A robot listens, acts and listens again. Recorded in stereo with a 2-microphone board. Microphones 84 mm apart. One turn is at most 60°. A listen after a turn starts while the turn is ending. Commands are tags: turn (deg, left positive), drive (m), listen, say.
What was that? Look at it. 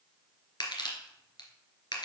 <turn deg="60"/>
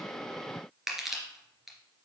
<say>Facing the crushing.</say>